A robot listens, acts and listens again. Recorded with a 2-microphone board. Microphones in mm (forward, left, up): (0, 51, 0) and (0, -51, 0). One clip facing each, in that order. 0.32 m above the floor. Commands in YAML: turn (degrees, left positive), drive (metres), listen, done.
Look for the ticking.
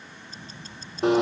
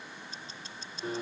turn: 40
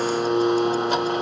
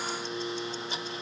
listen: true
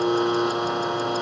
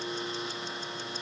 listen: true
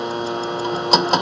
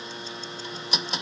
done: "I heard ticking, but can't make it out now. It was about straight ahead or 100° left."